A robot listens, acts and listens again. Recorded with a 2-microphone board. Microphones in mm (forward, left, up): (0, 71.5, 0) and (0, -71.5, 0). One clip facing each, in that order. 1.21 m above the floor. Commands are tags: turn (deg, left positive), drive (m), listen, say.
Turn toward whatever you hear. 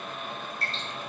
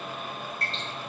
<turn deg="30"/>
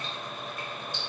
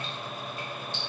<listen/>
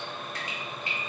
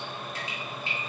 <turn deg="-25"/>
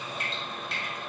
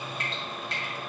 <say>Found it: dripping, straight ahead.</say>